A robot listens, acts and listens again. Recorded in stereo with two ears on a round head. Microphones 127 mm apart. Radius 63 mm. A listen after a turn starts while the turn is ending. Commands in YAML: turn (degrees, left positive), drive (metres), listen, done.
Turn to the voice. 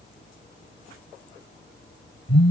listen: true
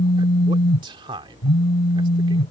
turn: -35
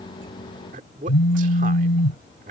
turn: -110
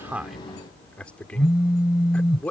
turn: 10
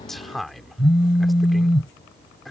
done: "Facing the man speaking."